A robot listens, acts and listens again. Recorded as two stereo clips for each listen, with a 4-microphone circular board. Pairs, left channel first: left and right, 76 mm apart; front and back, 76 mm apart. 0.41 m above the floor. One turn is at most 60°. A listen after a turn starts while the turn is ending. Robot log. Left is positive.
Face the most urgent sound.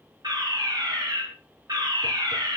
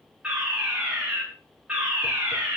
note: The fire alarm: 105° right.
cmd yaw -60
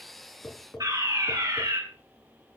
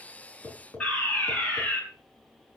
note: The fire alarm is now 70° right.
cmd yaw -60
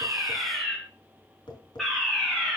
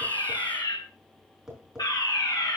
end: Found it: a fire alarm, straight ahead, over 4 m away.